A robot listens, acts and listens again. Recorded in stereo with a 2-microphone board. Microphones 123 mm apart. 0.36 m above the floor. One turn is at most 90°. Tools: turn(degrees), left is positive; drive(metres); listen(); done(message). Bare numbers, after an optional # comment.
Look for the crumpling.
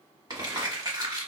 # The crumpling: about 35° right or 145° right.
turn(-35)
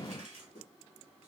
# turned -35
listen()
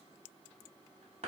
# So it is at 110° right.
turn(-90)
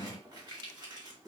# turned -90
# The crumpling is now 40° right.
turn(-40)
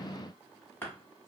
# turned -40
# The crumpling is now 15° left.
turn(15)
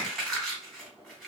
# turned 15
done("Facing the crumpling.")